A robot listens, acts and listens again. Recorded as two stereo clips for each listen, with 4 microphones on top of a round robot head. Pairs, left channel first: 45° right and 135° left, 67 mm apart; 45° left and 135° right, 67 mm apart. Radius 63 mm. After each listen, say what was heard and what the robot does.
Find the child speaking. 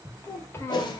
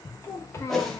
Found it: a child speaking, straight ahead.